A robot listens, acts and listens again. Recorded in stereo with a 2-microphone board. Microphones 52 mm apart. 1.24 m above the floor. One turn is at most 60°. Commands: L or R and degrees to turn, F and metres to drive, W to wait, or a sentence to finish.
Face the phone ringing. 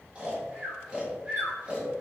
W
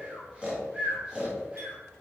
W
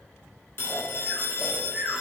L50
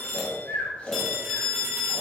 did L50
L10
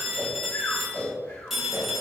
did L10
Facing the phone ringing, 1 to 2 m away.